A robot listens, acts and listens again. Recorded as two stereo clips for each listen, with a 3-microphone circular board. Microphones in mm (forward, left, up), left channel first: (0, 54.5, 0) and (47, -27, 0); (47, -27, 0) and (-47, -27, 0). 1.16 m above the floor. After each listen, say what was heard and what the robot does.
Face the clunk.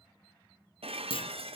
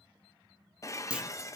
The clunk: 100° left. Turn 100° left.
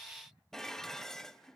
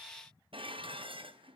I heard a clunk from this way, but can't make it out now.